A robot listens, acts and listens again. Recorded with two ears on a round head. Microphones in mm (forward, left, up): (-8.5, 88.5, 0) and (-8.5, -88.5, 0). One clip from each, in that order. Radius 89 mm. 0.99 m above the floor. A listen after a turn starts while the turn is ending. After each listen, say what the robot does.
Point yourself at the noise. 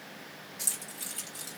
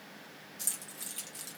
Turn 30° right.
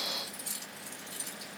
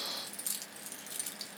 Turn 120° right.
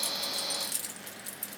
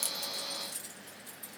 Turn 50° left.
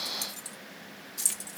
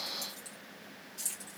Turn 25° left.
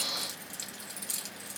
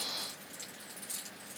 Turn 15° left.
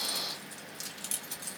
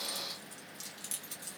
Facing the keys jangling, 1 to 2 m away.